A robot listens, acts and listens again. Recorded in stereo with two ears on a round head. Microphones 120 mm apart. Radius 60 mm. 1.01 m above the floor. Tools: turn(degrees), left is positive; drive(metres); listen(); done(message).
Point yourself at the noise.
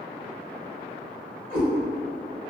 turn(degrees=65)
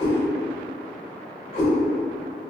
turn(degrees=50)
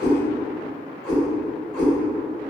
done("Found it: a cat meowing, straight ahead.")